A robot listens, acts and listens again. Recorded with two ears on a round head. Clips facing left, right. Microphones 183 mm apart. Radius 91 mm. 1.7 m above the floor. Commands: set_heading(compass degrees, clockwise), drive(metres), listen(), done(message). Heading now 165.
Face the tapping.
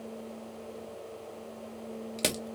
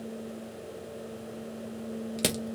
listen()
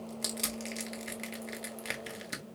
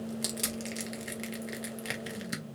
listen()
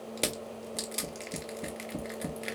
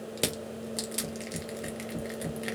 set_heading(100)
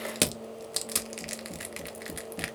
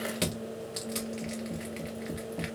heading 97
done("Found it: tapping, straight ahead, 2 to 4 m away.")